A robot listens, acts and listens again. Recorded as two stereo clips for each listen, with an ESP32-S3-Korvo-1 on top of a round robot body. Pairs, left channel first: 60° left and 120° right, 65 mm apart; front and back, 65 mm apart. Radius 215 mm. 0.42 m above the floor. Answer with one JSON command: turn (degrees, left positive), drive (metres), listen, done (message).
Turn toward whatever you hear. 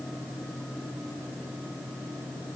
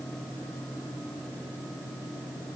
{"listen": true}
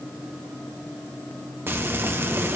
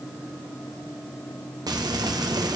{"turn": -175}
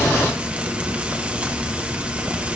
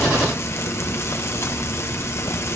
{"turn": -50}
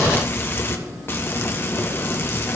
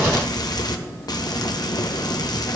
{"done": "Found it: frying, straight ahead, 1 to 2 m away."}